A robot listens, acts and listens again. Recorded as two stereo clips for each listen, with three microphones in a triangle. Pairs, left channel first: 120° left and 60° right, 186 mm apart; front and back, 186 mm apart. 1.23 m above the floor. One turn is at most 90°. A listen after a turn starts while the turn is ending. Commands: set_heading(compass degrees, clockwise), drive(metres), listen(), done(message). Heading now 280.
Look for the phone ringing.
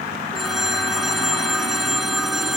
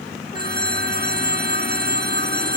set_heading(10)
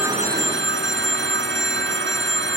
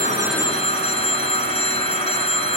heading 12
set_heading(67)
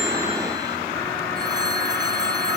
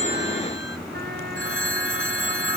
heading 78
set_heading(68)
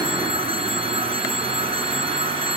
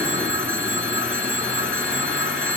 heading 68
done("Facing the phone ringing.")